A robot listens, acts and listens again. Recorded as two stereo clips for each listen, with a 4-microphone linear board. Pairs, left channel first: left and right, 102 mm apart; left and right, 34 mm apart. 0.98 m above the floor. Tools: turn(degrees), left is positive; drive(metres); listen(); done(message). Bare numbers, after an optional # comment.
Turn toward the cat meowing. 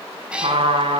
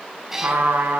turn(-30)
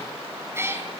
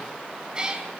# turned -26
# The cat meowing: about 20° right or 160° right.
turn(-20)
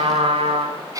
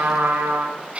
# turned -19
# So it is at 145° right.
turn(-145)
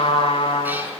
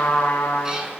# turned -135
# Nothing new. It was at 10° right.
turn(-10)
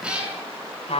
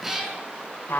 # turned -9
# The cat meowing is now 10° right.
turn(-10)
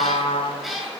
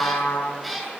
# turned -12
done("Found it: a cat meowing, straight ahead, over 4 m away.")